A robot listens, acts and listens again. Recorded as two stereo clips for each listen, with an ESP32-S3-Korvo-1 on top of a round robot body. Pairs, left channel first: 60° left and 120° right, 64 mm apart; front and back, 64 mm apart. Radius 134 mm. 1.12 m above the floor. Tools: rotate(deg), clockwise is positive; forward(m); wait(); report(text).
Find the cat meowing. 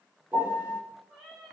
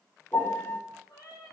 rotate(20)
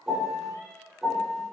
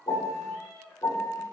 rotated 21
rotate(-10)
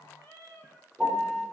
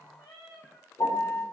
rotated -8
report("Facing the cat meowing, over 4 m away.")